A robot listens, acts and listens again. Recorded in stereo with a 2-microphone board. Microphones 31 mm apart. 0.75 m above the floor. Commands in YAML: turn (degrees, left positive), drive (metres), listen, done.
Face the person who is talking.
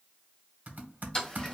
listen: true
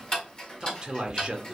turn: -25
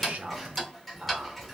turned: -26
turn: -125
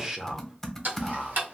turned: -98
turn: -25
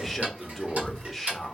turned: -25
done: "Found it: a man speaking, straight ahead."